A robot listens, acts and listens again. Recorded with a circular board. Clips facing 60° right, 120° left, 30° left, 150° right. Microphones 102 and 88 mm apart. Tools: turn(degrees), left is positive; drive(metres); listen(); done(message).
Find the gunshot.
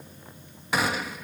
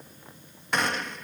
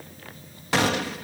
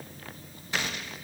turn(degrees=25)
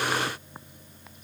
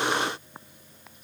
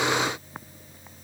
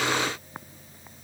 done("Facing where the gunshot came from. I can't hear it now.")